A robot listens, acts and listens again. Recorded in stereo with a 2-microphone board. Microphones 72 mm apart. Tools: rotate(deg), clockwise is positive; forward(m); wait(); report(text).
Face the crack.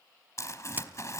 rotate(25)
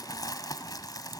wait()
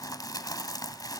report("I heard a crack, but can't make it out now. It was about straight ahead or 130° right.")